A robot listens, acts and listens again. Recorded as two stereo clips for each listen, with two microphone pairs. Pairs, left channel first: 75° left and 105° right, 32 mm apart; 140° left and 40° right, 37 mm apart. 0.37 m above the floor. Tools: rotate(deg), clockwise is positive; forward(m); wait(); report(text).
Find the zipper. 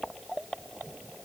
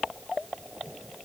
wait()
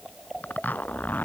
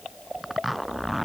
rotate(-50)
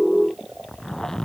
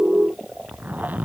report("Found it: a zipper, straight ahead.")